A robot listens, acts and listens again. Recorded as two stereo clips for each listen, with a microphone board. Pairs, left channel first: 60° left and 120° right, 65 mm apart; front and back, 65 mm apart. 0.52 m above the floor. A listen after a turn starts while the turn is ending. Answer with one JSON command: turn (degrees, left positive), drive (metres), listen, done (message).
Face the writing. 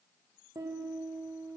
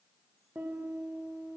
{"listen": true}
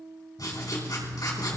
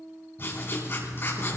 {"turn": 50}
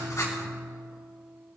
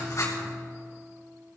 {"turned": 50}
{"listen": true}
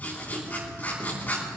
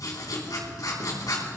{"done": "Found it: writing, straight ahead, 2 to 4 m away."}